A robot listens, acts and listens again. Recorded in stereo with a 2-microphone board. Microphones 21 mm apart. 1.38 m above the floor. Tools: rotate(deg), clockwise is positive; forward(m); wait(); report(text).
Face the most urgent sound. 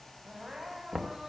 rotate(25)
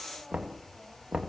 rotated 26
wait()
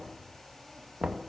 wait()
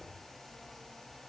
report("I heard crying, but can't make it out now. It was about straight ahead or 125° right.")